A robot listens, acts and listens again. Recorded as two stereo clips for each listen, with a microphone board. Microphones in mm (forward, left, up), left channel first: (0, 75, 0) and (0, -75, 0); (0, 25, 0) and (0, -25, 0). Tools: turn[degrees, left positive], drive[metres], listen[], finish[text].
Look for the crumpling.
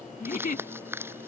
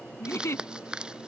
Action: turn[-30]
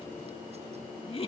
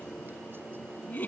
Action: listen[]
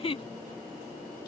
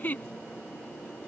Action: listen[]
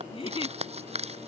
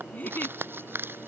Thought: So it is at 135° right.
Action: turn[-135]
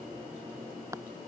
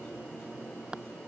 Thought: The crumpling is now 20° right.
Action: turn[-20]
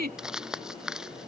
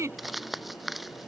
Action: finish[Found it: crumpling, straight ahead.]